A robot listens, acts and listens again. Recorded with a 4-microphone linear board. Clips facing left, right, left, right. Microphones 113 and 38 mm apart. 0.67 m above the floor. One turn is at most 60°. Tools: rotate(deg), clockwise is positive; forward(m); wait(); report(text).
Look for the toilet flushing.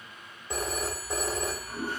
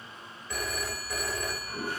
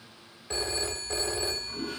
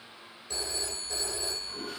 rotate(30)
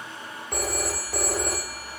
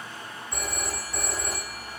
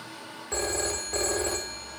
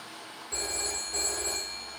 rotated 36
rotate(-25)
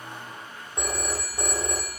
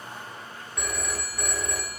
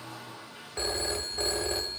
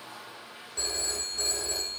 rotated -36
rotate(10)
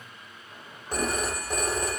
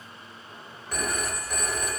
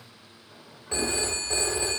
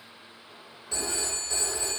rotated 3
wait()
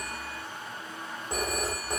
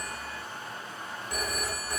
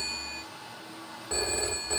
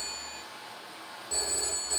report("Facing the toilet flushing.")